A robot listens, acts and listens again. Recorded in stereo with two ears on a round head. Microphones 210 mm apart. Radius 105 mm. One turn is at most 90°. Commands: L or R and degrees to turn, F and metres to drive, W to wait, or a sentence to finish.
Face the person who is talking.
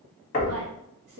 R50
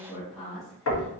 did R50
Found it: a woman speaking, straight ahead, under 1 m away.